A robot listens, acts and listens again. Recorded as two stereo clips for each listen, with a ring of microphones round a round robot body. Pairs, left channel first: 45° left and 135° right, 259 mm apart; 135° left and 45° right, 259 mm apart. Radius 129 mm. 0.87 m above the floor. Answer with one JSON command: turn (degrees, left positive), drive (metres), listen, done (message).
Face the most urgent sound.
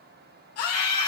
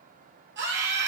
{"done": "Facing the scream."}